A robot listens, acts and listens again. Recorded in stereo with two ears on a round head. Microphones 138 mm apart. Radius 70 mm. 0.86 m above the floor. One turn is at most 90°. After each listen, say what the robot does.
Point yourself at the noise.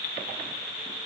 Keep listening.
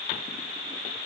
Keep listening.
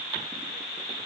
I can't make out anything to turn to.